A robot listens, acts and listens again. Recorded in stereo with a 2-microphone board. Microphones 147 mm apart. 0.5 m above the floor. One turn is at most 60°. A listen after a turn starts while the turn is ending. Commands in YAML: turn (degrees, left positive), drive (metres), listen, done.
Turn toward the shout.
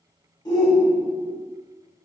turn: 25
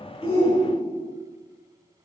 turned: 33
turn: 60
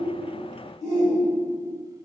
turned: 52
turn: 60
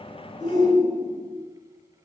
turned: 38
turn: 25
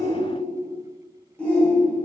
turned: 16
turn: 10
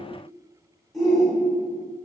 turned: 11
done: "Found it: a shout, straight ahead."